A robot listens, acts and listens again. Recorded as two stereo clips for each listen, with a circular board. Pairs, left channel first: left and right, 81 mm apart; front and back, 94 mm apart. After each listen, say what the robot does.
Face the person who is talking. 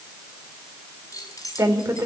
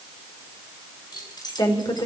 Turn 35° right.
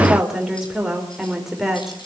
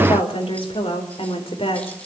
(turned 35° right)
Found it: a woman speaking, straight ahead.